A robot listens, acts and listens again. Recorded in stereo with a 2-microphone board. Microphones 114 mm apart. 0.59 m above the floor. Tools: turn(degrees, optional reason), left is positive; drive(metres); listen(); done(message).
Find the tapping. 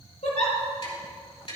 turn(degrees=55, reason="The tapping: about 55° left or 125° left.")
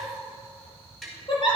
done("Facing the tapping, over 4 m away.")